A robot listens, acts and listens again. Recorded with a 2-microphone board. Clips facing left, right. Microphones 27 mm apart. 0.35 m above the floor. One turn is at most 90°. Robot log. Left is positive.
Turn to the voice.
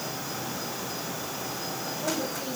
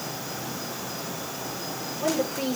note: The woman speaking: about 70° right or 110° right.
cmd yaw -70
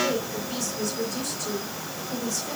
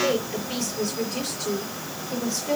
note: So it is at 40° right.
cmd yaw -40
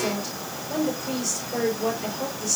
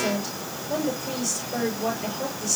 end: Found it: a woman speaking, straight ahead.